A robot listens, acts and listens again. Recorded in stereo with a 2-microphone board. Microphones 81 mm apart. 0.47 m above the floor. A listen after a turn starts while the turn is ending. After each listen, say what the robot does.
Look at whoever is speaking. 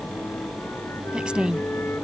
Turn 30° right.
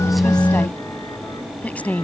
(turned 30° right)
Turn 20° left.
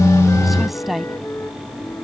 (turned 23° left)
Found it: a woman speaking, straight ahead.